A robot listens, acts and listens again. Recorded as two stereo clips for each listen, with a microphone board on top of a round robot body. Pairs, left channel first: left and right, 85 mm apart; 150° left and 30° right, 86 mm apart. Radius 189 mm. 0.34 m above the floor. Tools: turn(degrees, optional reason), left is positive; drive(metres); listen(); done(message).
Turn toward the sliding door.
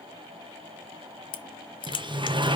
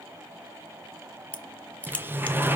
turn(degrees=-95, reason="The sliding door: 95° right.")
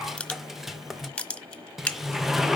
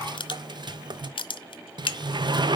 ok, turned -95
done("Facing the sliding door, under 1 m away.")